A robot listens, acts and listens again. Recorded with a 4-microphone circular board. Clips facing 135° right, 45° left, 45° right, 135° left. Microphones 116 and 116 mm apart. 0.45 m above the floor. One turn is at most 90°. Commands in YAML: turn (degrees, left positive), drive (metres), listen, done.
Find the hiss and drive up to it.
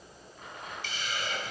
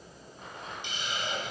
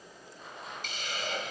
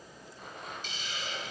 turn: -25
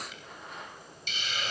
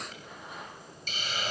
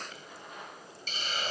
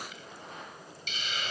drive: 1.0
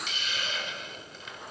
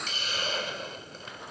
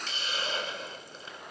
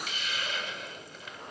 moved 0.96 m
drive: 1.0
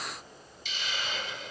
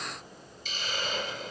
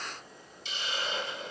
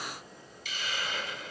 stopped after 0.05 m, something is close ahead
turn: 15
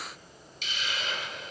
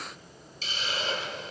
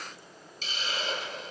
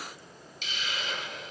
done: "I am next to the hiss."